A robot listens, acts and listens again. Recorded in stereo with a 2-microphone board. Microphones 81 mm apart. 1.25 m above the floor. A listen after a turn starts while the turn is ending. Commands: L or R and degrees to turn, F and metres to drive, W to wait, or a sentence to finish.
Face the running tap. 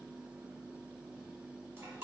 W
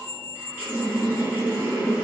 R25
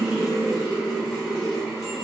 Found it: a running tap, straight ahead, 1 to 2 m away.